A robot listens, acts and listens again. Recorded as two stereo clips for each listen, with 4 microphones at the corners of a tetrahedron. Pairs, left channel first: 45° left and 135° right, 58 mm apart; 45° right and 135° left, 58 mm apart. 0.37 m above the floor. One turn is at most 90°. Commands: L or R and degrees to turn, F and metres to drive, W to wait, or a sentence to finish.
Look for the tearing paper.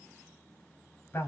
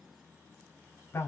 W
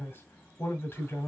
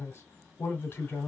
W
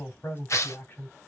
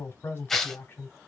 L40
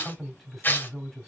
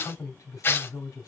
Found it: tearing paper, straight ahead.